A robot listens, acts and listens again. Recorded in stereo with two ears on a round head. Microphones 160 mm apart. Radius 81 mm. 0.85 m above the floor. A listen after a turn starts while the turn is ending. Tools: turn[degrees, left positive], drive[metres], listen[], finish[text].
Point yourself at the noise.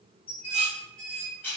Action: turn[30]
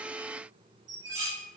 Thought: So it is at 20° right.
Action: turn[-20]
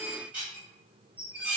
Thought: The dishes clattering is now 10° right.
Action: turn[-10]
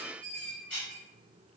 Action: finish[Facing the dishes clattering.]